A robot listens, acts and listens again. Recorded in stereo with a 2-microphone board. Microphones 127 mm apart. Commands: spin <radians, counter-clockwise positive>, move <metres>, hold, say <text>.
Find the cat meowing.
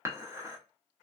hold
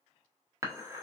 hold
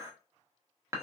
say I can't make out a cat meowing to turn to.